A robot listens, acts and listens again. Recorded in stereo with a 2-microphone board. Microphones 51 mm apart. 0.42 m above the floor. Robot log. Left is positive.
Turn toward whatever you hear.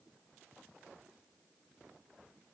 cmd idle
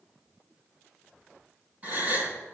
note: The gasp: about 40° right or 140° right.
cmd yaw -40
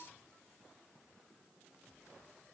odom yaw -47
cmd idle
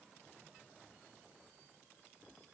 end: I heard a gasp, but can't make it out now. It was about 10° left or 95° right.